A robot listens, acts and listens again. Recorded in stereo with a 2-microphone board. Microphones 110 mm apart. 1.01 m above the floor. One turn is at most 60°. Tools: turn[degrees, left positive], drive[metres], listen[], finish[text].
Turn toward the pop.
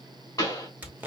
Thought: The pop: about 30° left or 150° left.
Action: turn[30]
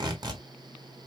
Action: listen[]
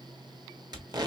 Action: finish[I heard a pop, but can't make it out now. It was about straight ahead or 120° left.]